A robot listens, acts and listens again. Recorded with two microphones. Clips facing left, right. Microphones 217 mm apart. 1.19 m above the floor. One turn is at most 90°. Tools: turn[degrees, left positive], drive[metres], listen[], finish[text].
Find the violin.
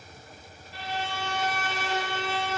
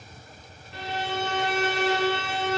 Thought: The violin: about 65° right or 115° right.
Action: turn[-65]
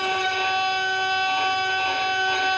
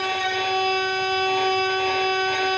Thought: So it is at 10° right.
Action: turn[-10]
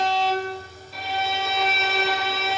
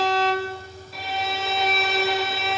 Action: finish[Facing the violin.]